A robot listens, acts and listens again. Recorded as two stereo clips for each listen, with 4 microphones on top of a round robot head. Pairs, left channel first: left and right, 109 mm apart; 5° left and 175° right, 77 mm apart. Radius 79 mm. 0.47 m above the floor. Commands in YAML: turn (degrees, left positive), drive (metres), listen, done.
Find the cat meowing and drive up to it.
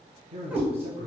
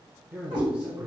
turn: -10
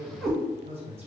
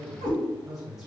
drive: 1.0
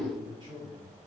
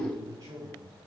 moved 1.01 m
listen: true
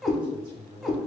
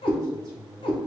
drive: 1.0
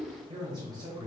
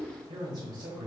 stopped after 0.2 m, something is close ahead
listen: true
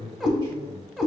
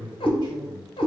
done: "Arrived at the cat meowing, straight ahead."